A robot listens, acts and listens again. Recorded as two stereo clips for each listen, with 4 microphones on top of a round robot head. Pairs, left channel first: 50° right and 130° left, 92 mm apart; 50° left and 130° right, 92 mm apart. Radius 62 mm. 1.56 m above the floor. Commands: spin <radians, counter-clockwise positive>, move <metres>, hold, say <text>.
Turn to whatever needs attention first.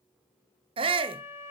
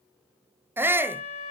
spin 2.79
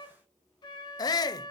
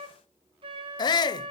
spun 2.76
say Found it: a shout, straight ahead, under 1 m away.